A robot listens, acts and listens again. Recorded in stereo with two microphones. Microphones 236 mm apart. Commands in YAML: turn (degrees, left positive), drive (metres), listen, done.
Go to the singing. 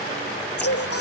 turn: 90
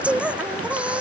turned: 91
drive: 1.0
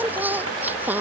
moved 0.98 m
turn: -10
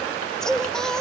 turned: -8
drive: 1.0
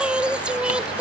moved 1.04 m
drive: 1.0
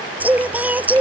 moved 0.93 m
drive: 1.0
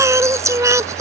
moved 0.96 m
turn: -15
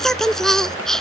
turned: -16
drive: 1.0
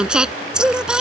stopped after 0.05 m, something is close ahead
done: "Arrived at the singing, straight ahead."